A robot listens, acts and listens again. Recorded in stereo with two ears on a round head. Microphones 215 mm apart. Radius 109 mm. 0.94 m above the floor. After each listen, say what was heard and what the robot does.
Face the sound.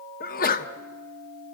The sneeze: about 35° left or 145° left. Turn 35° left.
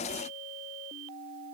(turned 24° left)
Keep listening.
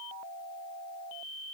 I heard a sneeze, but can't make it out now. It was about 15° left or 120° left.